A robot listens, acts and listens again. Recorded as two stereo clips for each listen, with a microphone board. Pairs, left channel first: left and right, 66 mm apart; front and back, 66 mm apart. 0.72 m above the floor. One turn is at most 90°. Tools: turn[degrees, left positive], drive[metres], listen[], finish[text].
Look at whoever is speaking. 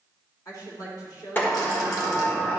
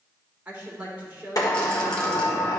Thought: The woman speaking: 115° left.
Action: turn[90]
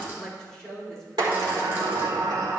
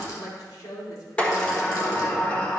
Thought: The woman speaking is now 10° left.
Action: turn[10]
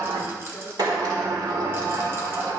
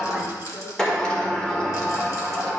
Action: listen[]
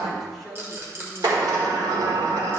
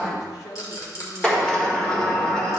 Action: finish[Found it: a woman speaking, straight ahead.]